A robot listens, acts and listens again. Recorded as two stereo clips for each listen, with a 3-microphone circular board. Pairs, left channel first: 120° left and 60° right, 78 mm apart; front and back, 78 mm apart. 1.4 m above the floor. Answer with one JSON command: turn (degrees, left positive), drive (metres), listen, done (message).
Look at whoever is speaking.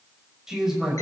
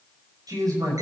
{"turn": -145}
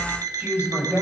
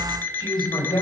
{"done": "Found it: a man speaking, straight ahead, over 4 m away."}